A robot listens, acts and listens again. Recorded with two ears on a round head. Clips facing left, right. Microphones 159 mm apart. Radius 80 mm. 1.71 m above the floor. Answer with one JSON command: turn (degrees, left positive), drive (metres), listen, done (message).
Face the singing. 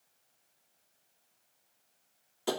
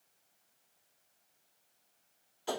{"listen": true}
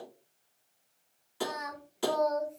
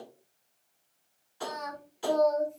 {"turn": 30}
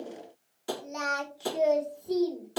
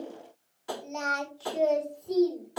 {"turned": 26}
{"turn": 30}
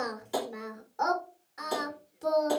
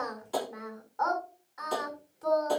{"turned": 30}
{"turn": 145}
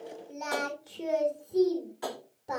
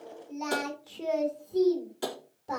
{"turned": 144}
{"done": "Found it: singing, straight ahead, 2 to 4 m away."}